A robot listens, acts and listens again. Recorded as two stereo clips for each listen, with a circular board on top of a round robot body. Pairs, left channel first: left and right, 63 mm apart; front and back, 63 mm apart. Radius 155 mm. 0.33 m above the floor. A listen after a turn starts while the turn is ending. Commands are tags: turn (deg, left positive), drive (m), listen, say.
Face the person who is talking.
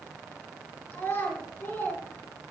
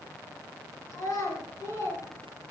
<turn deg="35"/>
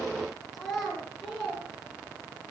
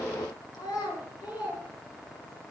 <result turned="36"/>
<say>Facing the child speaking.</say>